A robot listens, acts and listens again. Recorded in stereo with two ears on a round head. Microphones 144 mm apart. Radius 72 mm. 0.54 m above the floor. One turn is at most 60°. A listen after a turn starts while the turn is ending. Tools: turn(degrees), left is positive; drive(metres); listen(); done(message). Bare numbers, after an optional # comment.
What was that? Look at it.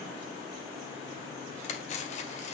# The cutlery clinking: about 45° left or 135° left.
turn(45)
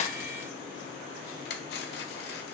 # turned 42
# So it is at 90° left.
turn(60)
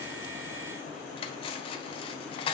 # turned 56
# The cutlery clinking is now 35° left.
turn(35)
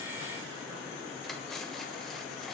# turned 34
listen()
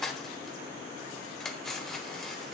done("Facing the cutlery clinking.")